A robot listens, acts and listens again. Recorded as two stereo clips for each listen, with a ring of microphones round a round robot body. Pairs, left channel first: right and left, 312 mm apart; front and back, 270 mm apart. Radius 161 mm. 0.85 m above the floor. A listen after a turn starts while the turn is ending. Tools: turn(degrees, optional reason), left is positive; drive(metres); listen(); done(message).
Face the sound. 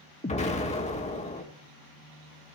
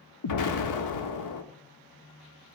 turn(degrees=-20, reason="The explosion: 20° right.")
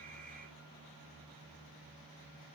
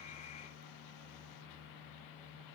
done("I heard an explosion from this way, but can't make it out now.")